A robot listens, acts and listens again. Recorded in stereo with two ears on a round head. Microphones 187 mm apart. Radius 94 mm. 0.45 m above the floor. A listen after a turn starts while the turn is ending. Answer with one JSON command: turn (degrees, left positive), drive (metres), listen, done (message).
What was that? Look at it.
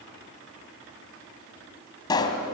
{"turn": 20}
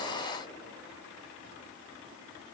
{"listen": true}
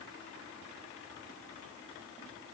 {"done": "I heard a pop, but can't make it out now. It was about straight ahead or 140° left."}